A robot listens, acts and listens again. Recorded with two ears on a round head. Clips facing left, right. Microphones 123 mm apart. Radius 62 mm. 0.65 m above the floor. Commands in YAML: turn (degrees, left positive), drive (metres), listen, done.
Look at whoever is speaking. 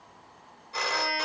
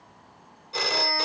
listen: true
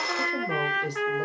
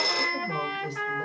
turn: 60
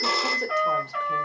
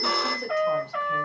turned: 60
listen: true
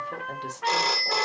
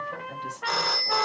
listen: true
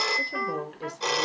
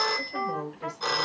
turn: 60
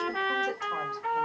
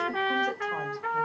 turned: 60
listen: true
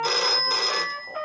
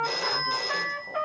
listen: true
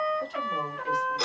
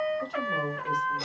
done: "Facing where the woman speaking came from. I can't hear it now."